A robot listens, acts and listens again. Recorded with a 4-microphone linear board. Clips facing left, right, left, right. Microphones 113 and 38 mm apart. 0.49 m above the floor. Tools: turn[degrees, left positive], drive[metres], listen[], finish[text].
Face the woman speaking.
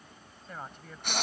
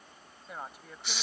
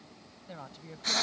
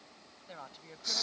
Action: turn[-30]
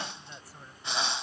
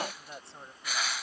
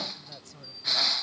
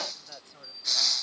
Thought: So it is at 155° right.
Action: turn[-155]
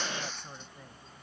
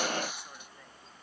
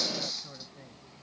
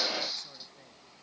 Thought: The woman speaking is now 15° left.
Action: turn[15]
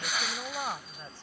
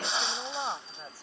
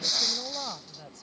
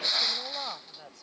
Thought: The woman speaking is now 10° right.
Action: turn[-10]
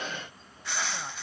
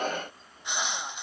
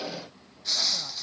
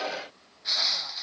Action: listen[]
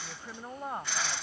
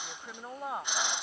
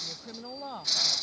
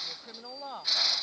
Action: finish[Facing the woman speaking.]